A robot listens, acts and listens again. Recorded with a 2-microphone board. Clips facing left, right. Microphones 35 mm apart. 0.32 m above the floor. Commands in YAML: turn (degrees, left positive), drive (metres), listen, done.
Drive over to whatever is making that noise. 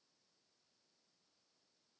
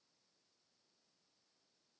listen: true
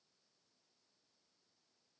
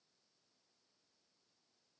listen: true
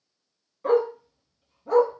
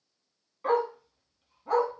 turn: -20
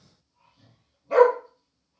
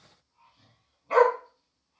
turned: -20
turn: -145
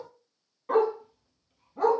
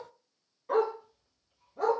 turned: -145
turn: 20
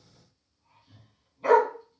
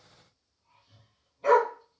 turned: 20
drive: 1.0
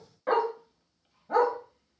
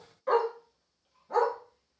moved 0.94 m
turn: 20
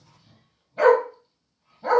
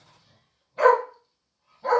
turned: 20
drive: 1.0
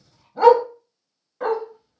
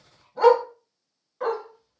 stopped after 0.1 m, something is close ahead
done: "I am next to the dog barking."